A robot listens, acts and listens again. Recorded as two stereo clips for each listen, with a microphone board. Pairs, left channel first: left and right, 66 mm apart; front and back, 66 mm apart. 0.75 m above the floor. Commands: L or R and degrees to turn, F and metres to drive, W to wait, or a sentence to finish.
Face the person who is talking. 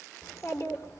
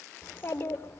L55
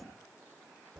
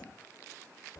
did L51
Found it: a child speaking, straight ahead, 2 to 4 m away.